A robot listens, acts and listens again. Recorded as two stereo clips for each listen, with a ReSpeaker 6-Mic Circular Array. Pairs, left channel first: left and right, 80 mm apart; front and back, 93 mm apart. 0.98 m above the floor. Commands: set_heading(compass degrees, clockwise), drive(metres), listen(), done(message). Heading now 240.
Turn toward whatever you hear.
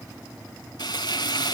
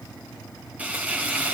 set_heading(130)
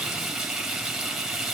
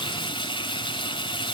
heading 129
done("Facing the frying.")